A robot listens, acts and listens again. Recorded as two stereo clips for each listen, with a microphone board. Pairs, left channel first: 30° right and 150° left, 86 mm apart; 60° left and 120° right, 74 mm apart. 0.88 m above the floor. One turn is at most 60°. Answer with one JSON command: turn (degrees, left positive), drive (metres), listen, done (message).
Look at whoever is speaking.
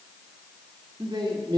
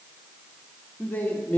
{"turn": 60}
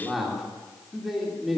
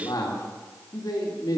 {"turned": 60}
{"turn": 60}
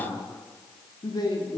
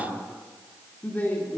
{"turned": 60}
{"done": "Found it: a man speaking, straight ahead, 2 to 4 m away."}